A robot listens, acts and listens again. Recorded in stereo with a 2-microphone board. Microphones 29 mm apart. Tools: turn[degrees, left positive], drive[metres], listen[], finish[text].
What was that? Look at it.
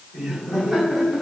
Action: turn[-30]
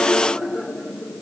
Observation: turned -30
Thought: So it is at 145° right.
Action: turn[-145]
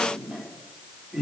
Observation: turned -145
Thought: The laughter is now 15° right.
Action: turn[-15]
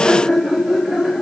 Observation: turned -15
Thought: The laughter is now 10° right.
Action: turn[-10]
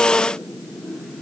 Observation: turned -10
Action: finish[Found it: laughter, straight ahead.]